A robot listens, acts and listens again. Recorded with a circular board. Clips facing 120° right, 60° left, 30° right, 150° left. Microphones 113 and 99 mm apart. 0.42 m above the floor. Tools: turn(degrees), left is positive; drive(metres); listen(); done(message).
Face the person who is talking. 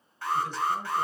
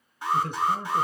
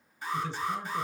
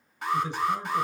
turn(degrees=80)
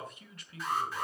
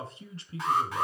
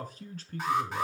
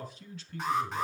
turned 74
done("Facing the man speaking.")